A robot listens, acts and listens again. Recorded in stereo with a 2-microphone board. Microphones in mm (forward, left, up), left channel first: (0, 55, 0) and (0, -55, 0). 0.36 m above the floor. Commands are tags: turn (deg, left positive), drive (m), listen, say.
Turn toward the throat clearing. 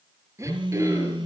<turn deg="-25"/>
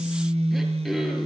<say>Found it: throat clearing, straight ahead.</say>